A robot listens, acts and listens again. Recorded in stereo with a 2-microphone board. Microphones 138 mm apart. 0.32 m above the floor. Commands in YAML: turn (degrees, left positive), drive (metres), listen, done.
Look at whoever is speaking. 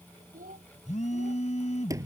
turn: -90
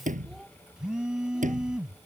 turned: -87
done: "Facing the child speaking."